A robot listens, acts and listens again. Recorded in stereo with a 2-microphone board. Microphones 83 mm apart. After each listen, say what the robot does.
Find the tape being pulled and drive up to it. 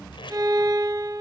Turn 90° left.
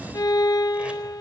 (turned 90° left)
Keep listening.
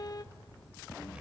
Keep listening.
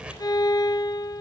I heard tape being pulled from this way, but can't make it out now. I did not reach it.